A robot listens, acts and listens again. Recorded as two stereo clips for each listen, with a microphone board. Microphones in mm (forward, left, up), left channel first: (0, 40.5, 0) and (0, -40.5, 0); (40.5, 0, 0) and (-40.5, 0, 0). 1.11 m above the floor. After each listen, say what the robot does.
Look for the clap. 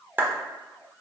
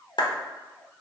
Turn 20° right.
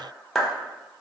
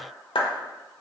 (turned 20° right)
Found it: a clap, straight ahead, under 1 m away.